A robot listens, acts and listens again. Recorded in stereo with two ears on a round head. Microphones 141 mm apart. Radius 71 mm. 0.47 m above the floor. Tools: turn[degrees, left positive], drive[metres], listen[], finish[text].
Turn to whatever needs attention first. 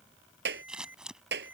Action: turn[-30]
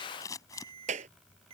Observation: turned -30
Thought: So it is at 140° right.
Action: turn[-140]
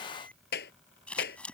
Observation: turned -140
Action: listen[]
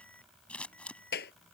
Action: listen[]
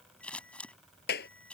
Action: finish[Facing where the alarm came from. I can't hear it now.]